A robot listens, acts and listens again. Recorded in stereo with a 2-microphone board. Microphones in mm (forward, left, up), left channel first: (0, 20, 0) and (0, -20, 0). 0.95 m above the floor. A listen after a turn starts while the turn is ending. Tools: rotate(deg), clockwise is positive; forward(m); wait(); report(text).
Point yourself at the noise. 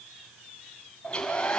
rotate(-20)
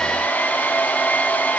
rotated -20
rotate(-140)
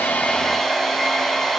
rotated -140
report("Facing the hair dryer.")